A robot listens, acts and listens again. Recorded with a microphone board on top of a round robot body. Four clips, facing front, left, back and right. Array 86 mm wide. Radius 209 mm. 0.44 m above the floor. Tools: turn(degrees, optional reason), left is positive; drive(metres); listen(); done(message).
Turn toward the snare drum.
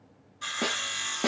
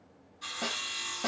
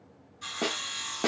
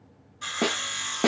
turn(degrees=-95, reason="The snare drum: 95° right.")
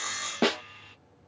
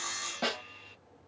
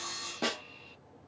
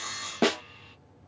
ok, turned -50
turn(degrees=-45, reason="The snare drum is now 45° right.")
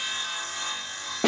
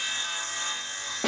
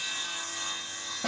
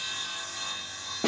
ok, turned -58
turn(degrees=10, reason="The snare drum is now 10° left.")
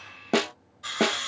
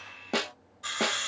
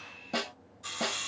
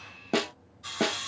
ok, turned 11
done("Found it: a snare drum, straight ahead.")